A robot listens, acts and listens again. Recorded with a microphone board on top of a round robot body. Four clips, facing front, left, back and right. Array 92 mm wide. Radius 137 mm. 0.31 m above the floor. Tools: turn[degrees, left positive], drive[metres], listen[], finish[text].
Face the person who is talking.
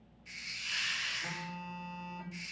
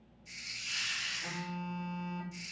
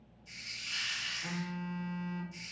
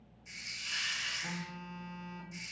Action: listen[]
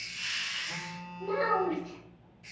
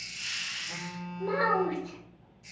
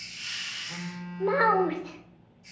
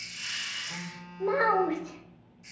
Thought: The child speaking: 160° right.
Action: turn[-160]
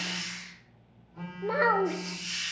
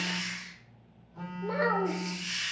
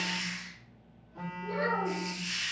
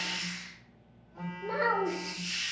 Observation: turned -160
Action: finish[Facing the child speaking, under 1 m away.]